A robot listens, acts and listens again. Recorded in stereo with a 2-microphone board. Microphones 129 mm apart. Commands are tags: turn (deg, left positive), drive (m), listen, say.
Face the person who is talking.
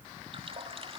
<listen/>
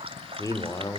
<turn deg="25"/>
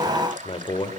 <turn deg="135"/>
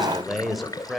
<say>Facing the man speaking, over 4 m away.</say>